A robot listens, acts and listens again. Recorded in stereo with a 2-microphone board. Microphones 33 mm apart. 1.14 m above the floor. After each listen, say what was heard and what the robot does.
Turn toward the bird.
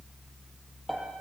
Keep listening.
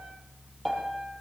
Keep listening.
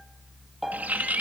The bird: about 60° right or 120° right. Turn 60° right.
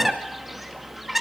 Found it: a bird, straight ahead, 2 to 4 m away.